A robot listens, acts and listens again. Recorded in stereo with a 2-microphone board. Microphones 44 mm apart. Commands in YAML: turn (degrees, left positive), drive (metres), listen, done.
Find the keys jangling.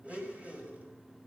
listen: true
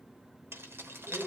turn: -60
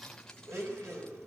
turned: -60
listen: true
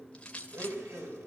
turn: 25
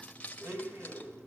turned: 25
turn: 30
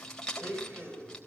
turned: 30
turn: 15
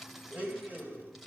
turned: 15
done: "Facing the keys jangling."